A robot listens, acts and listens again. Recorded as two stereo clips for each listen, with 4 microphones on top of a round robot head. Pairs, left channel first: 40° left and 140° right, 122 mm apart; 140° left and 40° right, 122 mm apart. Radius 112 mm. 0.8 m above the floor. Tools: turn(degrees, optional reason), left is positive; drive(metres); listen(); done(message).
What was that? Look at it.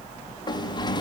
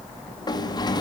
turn(degrees=90, reason="The sliding door: 90° left.")
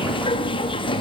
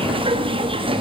done("Found it: a sliding door, straight ahead, 2 to 4 m away.")